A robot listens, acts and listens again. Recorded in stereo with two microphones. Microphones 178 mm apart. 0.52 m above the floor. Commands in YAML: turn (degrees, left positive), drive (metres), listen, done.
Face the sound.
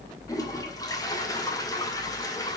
turn: 20
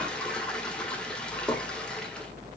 done: "Facing the toilet flushing, 2 to 4 m away."